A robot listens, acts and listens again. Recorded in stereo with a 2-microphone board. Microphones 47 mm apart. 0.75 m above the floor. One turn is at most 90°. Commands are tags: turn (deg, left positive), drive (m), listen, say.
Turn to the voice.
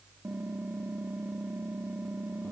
<listen/>
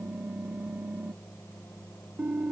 <listen/>
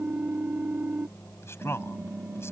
<turn deg="70"/>
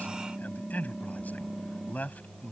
<turn deg="35"/>
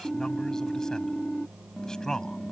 <turn deg="15"/>
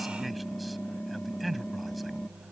<say>Facing the man speaking.</say>